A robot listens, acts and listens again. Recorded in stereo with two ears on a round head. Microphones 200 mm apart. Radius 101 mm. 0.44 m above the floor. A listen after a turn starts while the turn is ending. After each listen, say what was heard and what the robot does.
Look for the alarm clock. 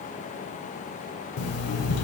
The alarm clock: about 70° left or 110° left. Turn 70° left.
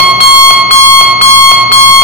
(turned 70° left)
So it is at 10° left. Turn 10° left.
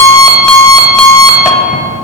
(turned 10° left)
Found it: an alarm clock, straight ahead.